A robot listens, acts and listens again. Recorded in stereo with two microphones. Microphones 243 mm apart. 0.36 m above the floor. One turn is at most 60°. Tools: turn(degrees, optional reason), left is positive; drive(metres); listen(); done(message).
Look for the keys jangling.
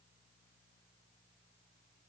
listen()
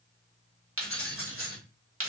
turn(degrees=-60, reason="The keys jangling: about 60° right or 120° right.")
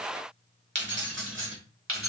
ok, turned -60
turn(degrees=-60, reason="So it is at 60° right.")
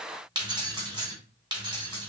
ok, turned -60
turn(degrees=-20, reason="The keys jangling is now 20° right.")
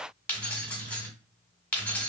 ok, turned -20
done("Found it: keys jangling, straight ahead.")